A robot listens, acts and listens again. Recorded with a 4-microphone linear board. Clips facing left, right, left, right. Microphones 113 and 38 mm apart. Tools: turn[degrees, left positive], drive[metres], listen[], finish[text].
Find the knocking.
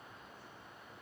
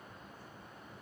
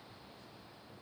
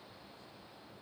Action: listen[]
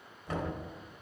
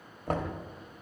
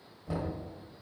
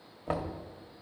Thought: The knocking: about 55° right or 125° right.
Action: turn[-55]
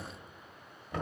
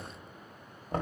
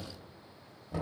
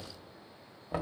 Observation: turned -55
Thought: So it is at 50° right.
Action: turn[-50]
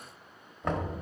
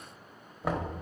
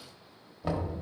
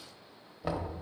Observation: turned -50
Thought: The knocking is now 10° right.
Action: turn[-10]
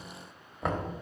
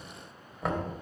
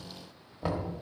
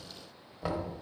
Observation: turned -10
Action: finish[Found it: knocking, straight ahead, 1 to 2 m away.]